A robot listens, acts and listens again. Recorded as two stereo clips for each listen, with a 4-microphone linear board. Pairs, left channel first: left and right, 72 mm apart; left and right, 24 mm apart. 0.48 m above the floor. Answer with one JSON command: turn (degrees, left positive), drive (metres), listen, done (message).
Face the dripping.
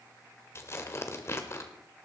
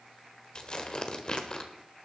{"listen": true}
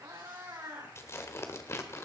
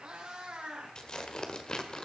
{"listen": true}
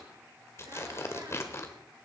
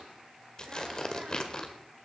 {"done": "I can't make out dripping to turn to."}